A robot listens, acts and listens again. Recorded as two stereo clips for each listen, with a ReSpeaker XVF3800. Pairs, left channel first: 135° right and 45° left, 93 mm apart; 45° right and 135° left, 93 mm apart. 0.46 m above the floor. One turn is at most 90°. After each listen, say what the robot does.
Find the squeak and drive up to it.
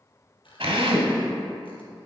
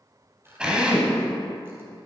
Turn 90° right.
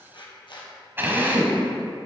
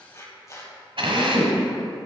Turn 90° right.
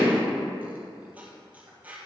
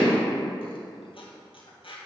Turn 30° right.
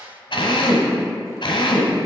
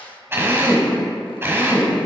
Turn 15° right.
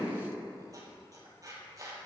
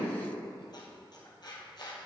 Drive 1.0 m forward.
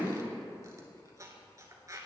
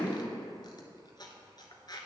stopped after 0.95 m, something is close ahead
I am next to the squeak.